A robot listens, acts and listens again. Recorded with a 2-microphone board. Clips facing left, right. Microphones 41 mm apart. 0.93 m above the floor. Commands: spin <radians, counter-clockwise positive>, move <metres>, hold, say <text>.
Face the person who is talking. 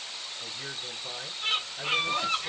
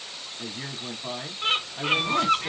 spin -1.31
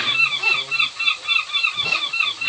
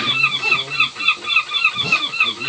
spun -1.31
hold
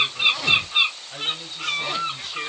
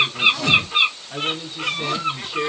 spin -0.44
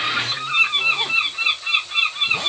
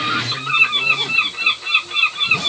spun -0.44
hold
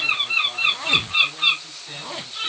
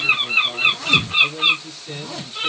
say Facing the man speaking, 2 to 4 m away.